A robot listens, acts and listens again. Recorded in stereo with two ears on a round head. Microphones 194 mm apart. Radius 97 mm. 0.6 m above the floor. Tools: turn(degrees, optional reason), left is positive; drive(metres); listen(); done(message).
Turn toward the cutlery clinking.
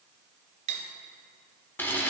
turn(degrees=-35, reason="The cutlery clinking: about 35° right or 145° right.")
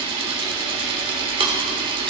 listen()
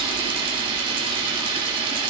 listen()
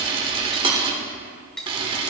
done("Facing the cutlery clinking, 1 to 2 m away.")